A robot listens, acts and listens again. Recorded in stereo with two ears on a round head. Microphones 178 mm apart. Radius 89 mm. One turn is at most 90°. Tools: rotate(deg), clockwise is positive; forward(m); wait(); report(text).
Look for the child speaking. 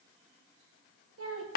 rotate(90)
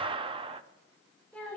report("Facing the child speaking.")